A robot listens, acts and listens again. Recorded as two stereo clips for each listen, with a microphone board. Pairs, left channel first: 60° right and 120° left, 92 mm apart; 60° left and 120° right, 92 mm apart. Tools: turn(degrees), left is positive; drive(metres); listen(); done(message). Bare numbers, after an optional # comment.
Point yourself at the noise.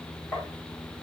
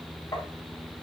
# The tapping: 10° left.
turn(10)
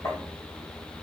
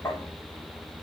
done("Facing the tapping, 2 to 4 m away.")